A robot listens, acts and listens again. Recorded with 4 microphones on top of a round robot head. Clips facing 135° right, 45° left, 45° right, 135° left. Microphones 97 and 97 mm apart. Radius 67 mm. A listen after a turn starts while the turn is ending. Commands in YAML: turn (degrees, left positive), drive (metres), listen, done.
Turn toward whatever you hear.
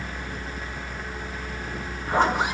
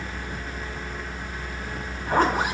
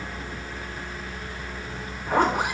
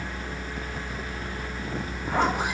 done: "Facing the zipper."